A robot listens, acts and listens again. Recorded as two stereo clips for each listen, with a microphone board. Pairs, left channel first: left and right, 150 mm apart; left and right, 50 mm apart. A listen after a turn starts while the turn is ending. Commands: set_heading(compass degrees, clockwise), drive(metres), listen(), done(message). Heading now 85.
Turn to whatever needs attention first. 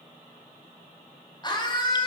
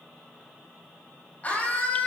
set_heading(55)
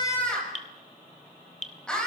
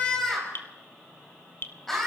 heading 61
done("Facing the scream, over 4 m away.")